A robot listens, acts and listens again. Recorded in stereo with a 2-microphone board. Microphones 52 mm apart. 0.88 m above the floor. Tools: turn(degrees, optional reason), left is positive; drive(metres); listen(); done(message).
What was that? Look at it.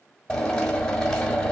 turn(degrees=30)
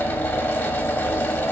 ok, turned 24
turn(degrees=150, reason="So it is at 150° left.")
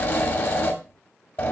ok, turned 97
turn(degrees=50, reason="The drill is now 50° left.")
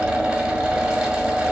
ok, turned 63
turn(degrees=-15, reason="The drill is now 15° right.")
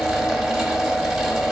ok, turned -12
done("Facing the drill, 2 to 4 m away.")